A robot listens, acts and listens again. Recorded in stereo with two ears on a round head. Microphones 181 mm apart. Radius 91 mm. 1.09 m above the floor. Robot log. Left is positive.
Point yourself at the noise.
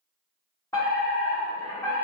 cmd yaw +30
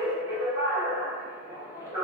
note: So it is at 15° right.
cmd yaw -15
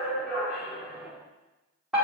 end: Facing the fire alarm, over 4 m away.